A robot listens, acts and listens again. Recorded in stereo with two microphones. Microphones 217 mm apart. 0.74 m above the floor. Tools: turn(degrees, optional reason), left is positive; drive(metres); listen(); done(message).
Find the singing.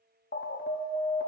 listen()
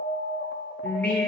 turn(degrees=30)
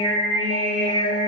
turn(degrees=-40, reason="So it is at 40° right.")
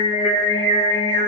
turn(degrees=-40, reason="The singing is now 40° right.")
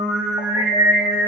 turn(degrees=-20, reason="The singing is now 20° right.")
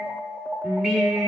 done("Facing the singing, 1 to 2 m away.")